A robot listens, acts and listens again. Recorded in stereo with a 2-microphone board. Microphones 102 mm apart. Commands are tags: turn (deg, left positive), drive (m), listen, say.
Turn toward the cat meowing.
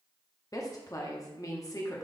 <listen/>
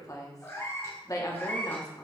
<turn deg="20"/>
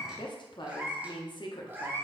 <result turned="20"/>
<turn deg="-25"/>
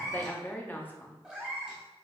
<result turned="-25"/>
<turn deg="-10"/>
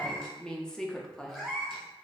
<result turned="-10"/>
<say>Found it: a cat meowing, straight ahead.</say>